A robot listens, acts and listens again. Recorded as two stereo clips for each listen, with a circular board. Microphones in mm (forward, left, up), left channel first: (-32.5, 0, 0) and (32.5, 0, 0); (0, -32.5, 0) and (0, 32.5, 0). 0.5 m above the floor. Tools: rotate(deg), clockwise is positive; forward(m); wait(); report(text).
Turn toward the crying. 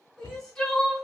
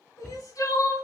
rotate(105)
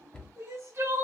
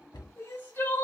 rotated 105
rotate(40)
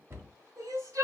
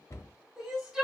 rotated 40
rotate(-10)
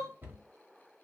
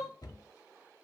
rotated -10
wait()
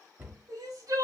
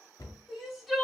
report("Found it: crying, straight ahead, 1 to 2 m away.")